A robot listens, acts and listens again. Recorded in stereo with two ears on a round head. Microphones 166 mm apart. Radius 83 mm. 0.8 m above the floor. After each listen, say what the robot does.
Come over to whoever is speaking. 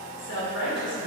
Turn 65° left.
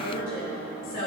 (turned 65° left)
Turn 45° left.
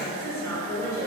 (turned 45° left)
Turn 20° left.
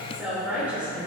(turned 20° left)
Drive 1.0 m forward.
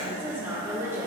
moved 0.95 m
Turn 15° right.
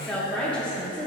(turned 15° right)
Drive 1.0 m forward.
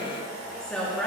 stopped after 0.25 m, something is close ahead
Arrived at the woman speaking, straight ahead.